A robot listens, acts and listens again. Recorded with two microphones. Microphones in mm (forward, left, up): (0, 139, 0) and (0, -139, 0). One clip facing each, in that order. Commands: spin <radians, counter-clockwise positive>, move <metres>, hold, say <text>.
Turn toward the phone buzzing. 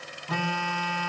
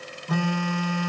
spin -0.96
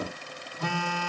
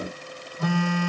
spin -1.13
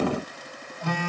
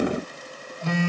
spin -0.44
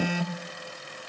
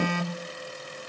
spin 0.17
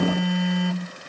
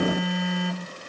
say Facing the phone buzzing, 1 to 2 m away.